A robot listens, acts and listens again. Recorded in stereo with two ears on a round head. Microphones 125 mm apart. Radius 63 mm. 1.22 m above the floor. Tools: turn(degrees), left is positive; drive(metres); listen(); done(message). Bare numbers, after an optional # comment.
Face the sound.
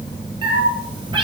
# The cat meowing: about 35° right or 145° right.
turn(-35)
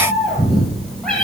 done("Facing the cat meowing, over 4 m away.")